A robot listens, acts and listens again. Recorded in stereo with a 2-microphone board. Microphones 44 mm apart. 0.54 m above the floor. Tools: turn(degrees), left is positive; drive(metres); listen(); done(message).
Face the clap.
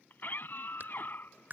turn(degrees=-50)
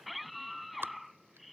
turn(degrees=-70)
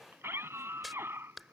done("Found it: a clap, straight ahead.")